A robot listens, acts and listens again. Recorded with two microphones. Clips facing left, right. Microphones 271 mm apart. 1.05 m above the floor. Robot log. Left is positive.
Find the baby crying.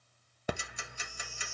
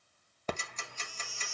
cmd yaw -90
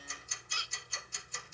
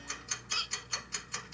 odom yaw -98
note: So it is at 20° left.
cmd yaw +20
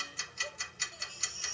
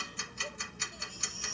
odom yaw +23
end: Facing the baby crying, 1 to 2 m away.